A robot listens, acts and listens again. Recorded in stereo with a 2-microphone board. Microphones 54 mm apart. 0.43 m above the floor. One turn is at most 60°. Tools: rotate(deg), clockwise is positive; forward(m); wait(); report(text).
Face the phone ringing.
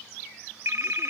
rotate(60)
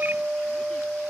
wait()
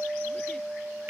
rotate(45)
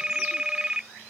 rotate(15)
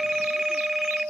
report("Facing the phone ringing.")